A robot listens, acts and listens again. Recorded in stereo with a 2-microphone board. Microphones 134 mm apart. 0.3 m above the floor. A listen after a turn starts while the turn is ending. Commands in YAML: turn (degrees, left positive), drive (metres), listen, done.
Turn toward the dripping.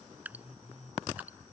turn: -30
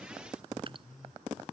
turn: -135
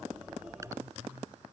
listen: true
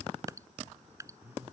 turn: -25
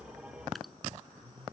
listen: true
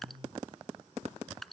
done: "Found it: dripping, straight ahead."